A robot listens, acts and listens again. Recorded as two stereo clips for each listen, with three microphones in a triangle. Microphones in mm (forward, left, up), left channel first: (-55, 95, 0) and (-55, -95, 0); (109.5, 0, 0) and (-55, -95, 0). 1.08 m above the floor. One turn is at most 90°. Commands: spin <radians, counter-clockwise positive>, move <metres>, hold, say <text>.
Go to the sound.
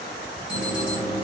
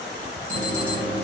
spin -1.57
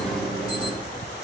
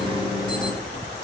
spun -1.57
spin -0.96
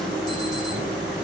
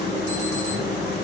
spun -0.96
move 1.0
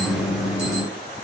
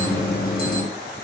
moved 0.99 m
move 1.0
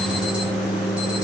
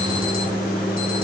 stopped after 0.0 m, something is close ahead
say Arrived at the alarm, straight ahead.